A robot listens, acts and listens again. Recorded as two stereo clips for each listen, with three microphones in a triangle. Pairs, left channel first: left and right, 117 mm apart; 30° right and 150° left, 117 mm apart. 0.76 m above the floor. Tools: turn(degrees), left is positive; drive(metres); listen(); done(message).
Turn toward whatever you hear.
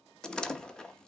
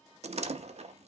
turn(degrees=175)
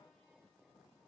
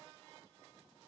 done("Facing where the door slam came from. I can't hear it now.")